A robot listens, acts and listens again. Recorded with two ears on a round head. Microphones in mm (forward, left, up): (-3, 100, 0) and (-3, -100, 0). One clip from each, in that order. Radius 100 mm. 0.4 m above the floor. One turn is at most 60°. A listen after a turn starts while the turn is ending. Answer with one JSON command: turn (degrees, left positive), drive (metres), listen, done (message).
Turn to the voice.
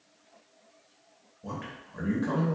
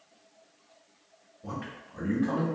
{"turn": 25}
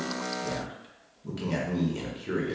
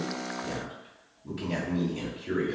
{"turn": 40}
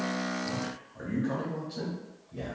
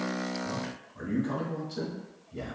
{"done": "Facing the man speaking, 1 to 2 m away."}